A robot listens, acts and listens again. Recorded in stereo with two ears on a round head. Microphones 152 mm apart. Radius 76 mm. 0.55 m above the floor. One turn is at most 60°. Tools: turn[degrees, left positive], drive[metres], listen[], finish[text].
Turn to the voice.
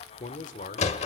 Thought: The man speaking: about 45° left or 135° left.
Action: turn[45]
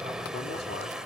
Action: listen[]
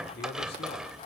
Thought: So it is at 80° left.
Action: turn[60]
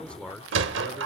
Action: finish[Found it: a man speaking, straight ahead.]